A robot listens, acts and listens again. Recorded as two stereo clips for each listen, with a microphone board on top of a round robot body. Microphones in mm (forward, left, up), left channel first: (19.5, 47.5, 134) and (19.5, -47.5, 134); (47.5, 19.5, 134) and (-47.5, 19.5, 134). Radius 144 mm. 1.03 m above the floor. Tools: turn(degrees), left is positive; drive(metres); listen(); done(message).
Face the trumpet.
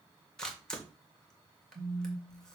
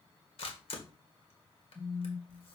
listen()
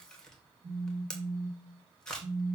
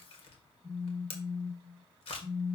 listen()
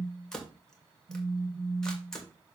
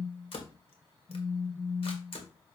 done("I can't make out a trumpet to turn to.")